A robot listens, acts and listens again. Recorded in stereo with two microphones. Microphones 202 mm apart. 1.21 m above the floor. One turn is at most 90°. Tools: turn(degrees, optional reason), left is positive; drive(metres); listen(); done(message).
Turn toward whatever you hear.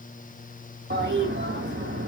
turn(degrees=-55, reason="The toilet flushing: about 55° right or 125° right.")
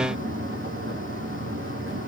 turn(degrees=-70, reason="So it is at 70° right.")
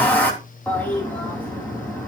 turn(degrees=10, reason="The toilet flushing is now 10° left.")
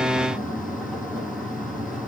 done("Facing the toilet flushing, over 4 m away.")